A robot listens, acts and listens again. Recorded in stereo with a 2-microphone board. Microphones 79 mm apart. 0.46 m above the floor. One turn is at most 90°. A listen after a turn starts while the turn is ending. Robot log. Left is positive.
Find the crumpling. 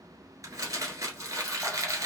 note: The crumpling: about 45° right or 135° right.
cmd yaw -45
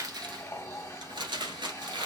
note: So it is at 85° right.
cmd yaw -85
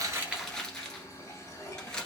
note: The crumpling is now 10° left.
cmd yaw +10
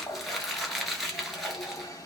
end: Found it: crumpling, straight ahead, 1 to 2 m away.